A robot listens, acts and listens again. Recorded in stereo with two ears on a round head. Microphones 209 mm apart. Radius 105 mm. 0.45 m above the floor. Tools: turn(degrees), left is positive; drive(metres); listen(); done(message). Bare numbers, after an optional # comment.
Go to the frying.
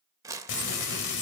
# The frying: about 50° left or 130° left.
turn(50)
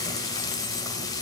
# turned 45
# So it is at 20° left.
turn(20)
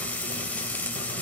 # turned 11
drive(1.0)
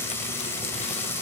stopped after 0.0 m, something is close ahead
# The frying is now 10° left.
turn(10)
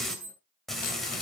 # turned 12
done("Blocked. The frying is further on, straight ahead.")